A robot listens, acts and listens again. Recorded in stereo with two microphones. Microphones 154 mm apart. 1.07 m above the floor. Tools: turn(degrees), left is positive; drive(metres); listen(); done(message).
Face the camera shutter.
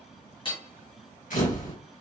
turn(degrees=60)
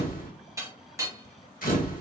turn(degrees=65)
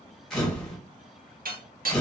done("Found it: a camera shutter, straight ahead.")